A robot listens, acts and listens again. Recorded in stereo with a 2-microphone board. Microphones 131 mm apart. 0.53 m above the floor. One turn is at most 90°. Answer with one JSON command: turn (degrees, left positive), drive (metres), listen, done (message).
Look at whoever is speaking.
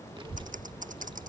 {"turn": -35}
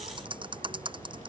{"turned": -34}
{"turn": -90}
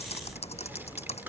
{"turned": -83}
{"turn": -15}
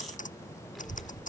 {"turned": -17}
{"done": "Found it: a child speaking, straight ahead."}